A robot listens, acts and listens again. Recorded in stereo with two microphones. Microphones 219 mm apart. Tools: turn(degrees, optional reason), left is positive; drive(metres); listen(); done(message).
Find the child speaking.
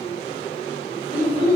turn(degrees=75, reason="The child speaking: about 75° left or 105° left.")
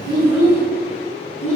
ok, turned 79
turn(degrees=-10, reason="So it is at 10° right.")
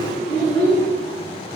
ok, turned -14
done("Facing the child speaking.")